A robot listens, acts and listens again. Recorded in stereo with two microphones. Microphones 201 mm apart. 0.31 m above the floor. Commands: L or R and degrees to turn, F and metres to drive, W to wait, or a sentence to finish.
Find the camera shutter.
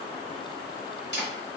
L60
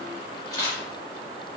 L25
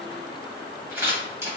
R15
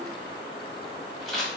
Found it: a camera shutter, straight ahead, 1 to 2 m away.